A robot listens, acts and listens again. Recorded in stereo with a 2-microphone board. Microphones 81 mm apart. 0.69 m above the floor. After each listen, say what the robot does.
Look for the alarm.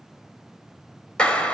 Keep listening.
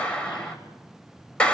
Keep listening.
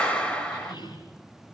I can't make out an alarm to turn to.